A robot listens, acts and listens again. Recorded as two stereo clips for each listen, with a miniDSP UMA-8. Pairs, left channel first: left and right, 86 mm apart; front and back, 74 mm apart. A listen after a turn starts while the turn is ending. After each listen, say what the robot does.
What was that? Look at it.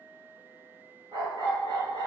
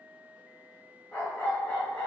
Turn 85° right.
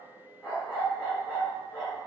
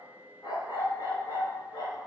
Found it: a dog barking, straight ahead, 1 to 2 m away.